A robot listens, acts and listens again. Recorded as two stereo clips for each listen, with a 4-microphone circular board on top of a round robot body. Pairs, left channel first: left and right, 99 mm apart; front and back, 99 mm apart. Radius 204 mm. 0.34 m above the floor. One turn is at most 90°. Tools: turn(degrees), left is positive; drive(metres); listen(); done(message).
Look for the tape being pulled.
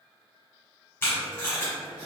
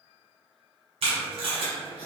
turn(degrees=90)
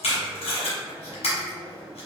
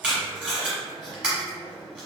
turn(degrees=90)
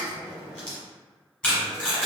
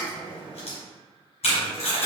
turn(degrees=10)
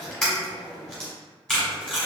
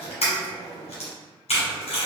done("Found it: tape being pulled, straight ahead.")